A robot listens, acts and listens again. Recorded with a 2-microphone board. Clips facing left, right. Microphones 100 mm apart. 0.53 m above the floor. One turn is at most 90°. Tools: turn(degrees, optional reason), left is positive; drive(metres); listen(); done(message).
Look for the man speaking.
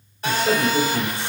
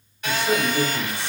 turn(degrees=55, reason="The man speaking: about 55° left or 125° left.")
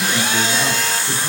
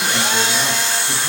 listen()
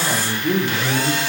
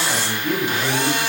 turn(degrees=15, reason="So it is at 15° left.")
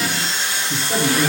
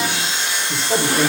turn(degrees=-25, reason="The man speaking is now 25° right.")
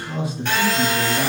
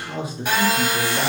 turn(degrees=-30, reason="The man speaking is now 30° right.")
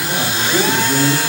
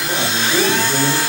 done("Facing the man speaking, 1 to 2 m away.")